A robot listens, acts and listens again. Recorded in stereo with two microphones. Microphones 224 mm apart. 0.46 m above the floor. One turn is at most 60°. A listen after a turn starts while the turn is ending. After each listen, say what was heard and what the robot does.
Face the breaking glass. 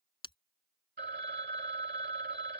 The breaking glass: about 20° left or 160° left. Turn 20° left.
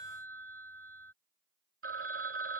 Keep listening.
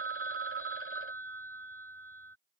I heard breaking glass, but can't make it out now. It was about straight ahead or 140° left.